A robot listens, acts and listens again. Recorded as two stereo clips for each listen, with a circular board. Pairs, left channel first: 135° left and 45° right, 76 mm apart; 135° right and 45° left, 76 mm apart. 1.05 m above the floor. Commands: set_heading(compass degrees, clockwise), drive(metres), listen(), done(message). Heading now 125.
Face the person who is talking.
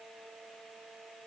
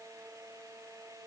listen()
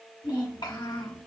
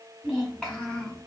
set_heading(340)
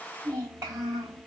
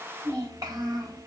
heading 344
set_heading(334)
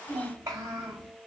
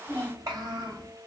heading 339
set_heading(329)
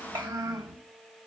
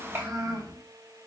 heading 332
done("Facing the child speaking, over 4 m away.")